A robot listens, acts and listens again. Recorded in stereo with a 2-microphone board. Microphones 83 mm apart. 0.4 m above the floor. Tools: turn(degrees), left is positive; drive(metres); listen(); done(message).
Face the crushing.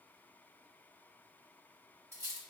listen()
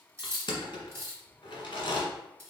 turn(degrees=90)
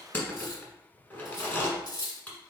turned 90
turn(degrees=20)
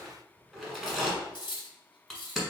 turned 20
done("Facing the crushing.")